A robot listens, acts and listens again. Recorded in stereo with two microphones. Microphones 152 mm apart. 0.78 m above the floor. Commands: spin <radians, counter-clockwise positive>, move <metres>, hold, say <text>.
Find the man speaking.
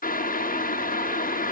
hold
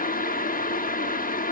hold
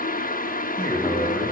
spin 0.52
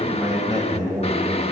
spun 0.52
spin -0.44
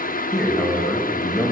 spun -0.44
say Facing the man speaking, over 4 m away.